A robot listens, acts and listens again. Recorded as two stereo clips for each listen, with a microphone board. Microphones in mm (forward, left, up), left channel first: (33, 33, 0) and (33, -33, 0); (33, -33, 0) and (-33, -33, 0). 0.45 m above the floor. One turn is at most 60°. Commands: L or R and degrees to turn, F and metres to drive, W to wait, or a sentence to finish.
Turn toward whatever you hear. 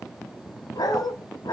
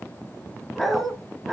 L60
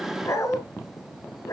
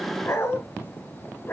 L55
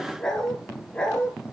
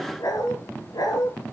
L15
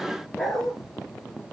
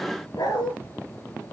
Found it: a dog barking, straight ahead, 2 to 4 m away.